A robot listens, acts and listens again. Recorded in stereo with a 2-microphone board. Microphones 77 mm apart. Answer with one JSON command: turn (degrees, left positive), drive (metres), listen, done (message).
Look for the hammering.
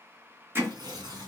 {"turn": -30}
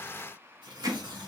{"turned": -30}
{"turn": -120}
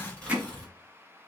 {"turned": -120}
{"turn": -20}
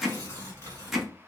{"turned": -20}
{"done": "Facing the hammering."}